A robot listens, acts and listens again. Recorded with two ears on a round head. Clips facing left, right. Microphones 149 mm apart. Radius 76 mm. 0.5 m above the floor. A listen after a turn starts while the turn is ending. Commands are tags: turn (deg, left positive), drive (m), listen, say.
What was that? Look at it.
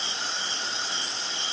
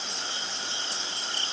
<listen/>
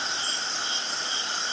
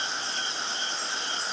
<listen/>
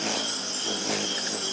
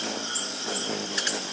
<say>I can't make out anything to turn to.</say>